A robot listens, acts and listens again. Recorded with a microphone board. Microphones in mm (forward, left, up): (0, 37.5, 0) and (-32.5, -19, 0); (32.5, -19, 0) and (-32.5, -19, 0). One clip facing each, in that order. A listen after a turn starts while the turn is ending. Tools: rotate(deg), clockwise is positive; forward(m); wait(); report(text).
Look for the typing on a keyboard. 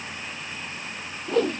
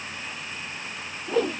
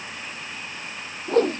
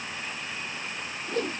wait()
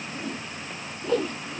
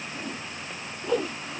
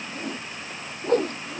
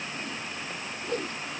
wait()
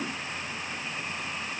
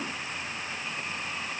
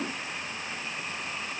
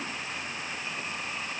report("I can't make out typing on a keyboard to turn to.")